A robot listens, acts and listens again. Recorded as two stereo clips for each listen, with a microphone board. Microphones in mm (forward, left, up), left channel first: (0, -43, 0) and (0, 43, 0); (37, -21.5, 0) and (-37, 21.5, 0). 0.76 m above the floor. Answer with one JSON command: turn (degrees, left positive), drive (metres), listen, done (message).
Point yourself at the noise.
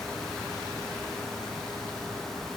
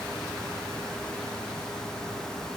{"listen": true}
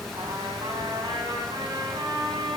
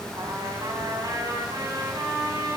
{"turn": 110}
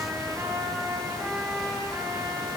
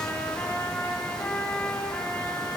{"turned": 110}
{"turn": 35}
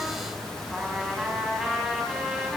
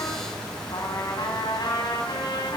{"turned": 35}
{"done": "Facing the trumpet, 2 to 4 m away."}